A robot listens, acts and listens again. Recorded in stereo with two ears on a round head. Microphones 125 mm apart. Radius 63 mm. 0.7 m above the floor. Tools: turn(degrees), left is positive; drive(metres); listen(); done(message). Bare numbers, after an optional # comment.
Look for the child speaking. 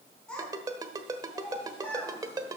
turn(30)
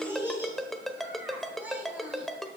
# So it is at 10° right.
turn(-10)
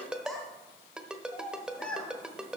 # The child speaking is now 10° left.
turn(10)
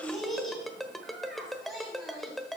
done("Facing the child speaking, 2 to 4 m away.")